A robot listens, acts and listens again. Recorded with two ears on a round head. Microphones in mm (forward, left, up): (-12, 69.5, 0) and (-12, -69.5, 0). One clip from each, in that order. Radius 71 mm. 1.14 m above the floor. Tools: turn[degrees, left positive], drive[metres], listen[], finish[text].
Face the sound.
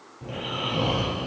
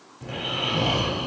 Thought: The snoring: about 25° right or 155° right.
Action: turn[-25]
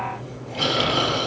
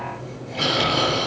Action: finish[Found it: snoring, straight ahead.]